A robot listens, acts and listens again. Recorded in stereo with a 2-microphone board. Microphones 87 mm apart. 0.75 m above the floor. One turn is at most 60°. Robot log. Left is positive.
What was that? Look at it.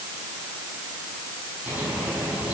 note: The bird: about 15° right or 165° right.
cmd yaw -15
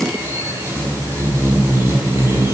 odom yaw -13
note: So it is at 150° right.
cmd yaw -60
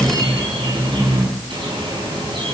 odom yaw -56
note: The bird is now 90° right.
cmd yaw -60
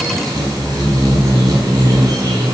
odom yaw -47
note: The bird is now 45° right.
cmd yaw -45
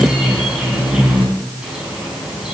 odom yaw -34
note: The bird is now 10° right.
cmd yaw -10
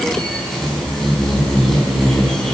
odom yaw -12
end: Facing the bird, over 4 m away.